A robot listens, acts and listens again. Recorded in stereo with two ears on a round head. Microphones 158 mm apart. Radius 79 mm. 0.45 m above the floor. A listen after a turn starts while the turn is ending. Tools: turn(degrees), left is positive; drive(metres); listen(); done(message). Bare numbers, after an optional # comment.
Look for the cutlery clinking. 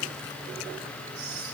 listen()
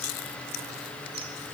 listen()
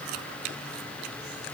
done("I can't make out cutlery clinking to turn to.")